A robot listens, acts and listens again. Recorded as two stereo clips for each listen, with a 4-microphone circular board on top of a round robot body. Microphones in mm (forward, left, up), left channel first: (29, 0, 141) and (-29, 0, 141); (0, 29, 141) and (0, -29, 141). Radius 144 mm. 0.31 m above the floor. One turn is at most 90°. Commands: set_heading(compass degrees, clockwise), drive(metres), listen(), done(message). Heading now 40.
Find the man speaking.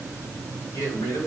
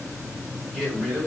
set_heading(55)
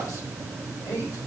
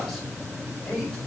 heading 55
listen()
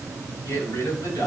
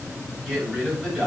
set_heading(65)
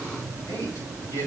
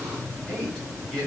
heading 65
done("Found it: a man speaking, straight ahead, over 4 m away.")